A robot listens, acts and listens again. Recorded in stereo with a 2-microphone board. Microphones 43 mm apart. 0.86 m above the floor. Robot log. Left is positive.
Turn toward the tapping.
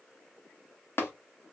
note: The tapping: about 65° left or 115° left.
cmd yaw +65
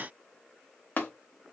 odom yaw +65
note: So it is at 50° left.
cmd yaw +50
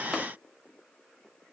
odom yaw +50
cmd idle
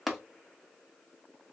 end: Found it: tapping, straight ahead, under 1 m away.